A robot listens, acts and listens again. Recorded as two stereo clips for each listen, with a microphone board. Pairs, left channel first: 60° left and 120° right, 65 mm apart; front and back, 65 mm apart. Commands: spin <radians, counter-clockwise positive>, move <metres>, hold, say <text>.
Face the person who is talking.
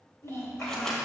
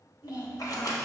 spin 0.35
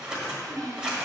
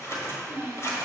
say Facing the child speaking, 2 to 4 m away.